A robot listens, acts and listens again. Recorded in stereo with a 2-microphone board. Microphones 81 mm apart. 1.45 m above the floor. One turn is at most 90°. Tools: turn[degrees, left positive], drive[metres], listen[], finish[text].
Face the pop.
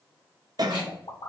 Thought: The pop: about 65° left or 115° left.
Action: turn[65]
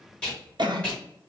Action: listen[]
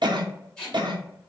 Action: finish[I heard a pop, but can't make it out now. It was about straight ahead or 50° left.]